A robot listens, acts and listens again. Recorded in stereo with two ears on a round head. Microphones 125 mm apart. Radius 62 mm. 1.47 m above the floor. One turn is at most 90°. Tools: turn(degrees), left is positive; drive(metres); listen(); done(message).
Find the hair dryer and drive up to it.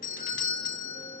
listen()
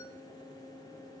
listen()
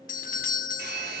turn(degrees=-65)
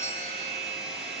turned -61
drive(metres=1.0)
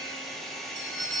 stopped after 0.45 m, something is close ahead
done("Something is in my way. I am facing the hair dryer but have not reached it.")